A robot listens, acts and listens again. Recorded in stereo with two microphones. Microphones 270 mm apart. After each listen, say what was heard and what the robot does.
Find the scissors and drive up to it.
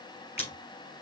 The scissors: about 20° left or 160° left. Turn 20° left.
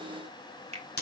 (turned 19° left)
So it is at 140° left. Turn 140° left.
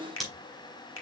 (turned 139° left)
Drive 1.0 m forward.
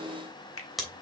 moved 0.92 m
Drive 1.0 m forward.
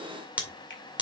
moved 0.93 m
Drive 1.0 m forward.
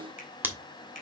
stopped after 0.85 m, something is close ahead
The scissors is now 10° right. Turn 10° right.
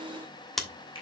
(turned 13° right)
Arrived at the scissors, straight ahead.